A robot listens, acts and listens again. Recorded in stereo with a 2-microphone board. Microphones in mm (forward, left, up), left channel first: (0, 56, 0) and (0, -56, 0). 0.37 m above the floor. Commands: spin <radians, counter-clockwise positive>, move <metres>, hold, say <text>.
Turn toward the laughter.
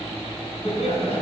spin 1.13
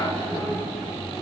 say Facing the laughter.